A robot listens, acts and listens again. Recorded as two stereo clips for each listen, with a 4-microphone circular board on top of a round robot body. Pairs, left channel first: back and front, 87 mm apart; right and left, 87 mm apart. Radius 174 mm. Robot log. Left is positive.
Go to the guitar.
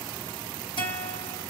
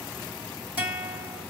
note: The guitar: 165° left.
cmd yaw +165
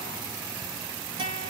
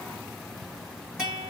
note: The guitar is now 10° left.
cmd yaw +10
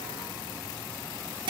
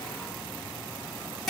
cmd fwd 1.0
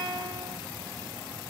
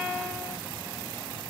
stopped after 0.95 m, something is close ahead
note: The guitar is now 10° left.
cmd yaw +10
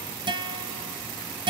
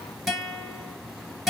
end: I am next to the guitar.